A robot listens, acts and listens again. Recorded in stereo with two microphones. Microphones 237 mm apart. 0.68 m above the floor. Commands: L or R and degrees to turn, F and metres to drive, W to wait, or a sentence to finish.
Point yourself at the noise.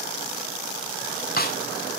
L40
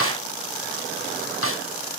L95
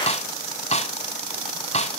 L30
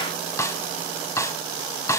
L15
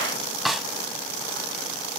Found it: a snare drum, straight ahead, under 1 m away.